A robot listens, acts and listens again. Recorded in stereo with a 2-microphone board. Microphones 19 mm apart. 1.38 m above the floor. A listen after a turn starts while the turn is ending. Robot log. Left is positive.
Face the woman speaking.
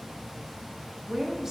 note: The woman speaking: about 25° right or 155° right.
cmd yaw -25
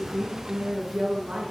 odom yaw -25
note: So it is at 110° right.
cmd yaw -110
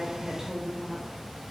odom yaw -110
note: The woman speaking is now 15° right.
cmd yaw -15
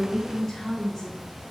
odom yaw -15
note: The woman speaking is now 15° left.
cmd yaw +15
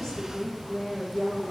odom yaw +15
end: Facing the woman speaking, 2 to 4 m away.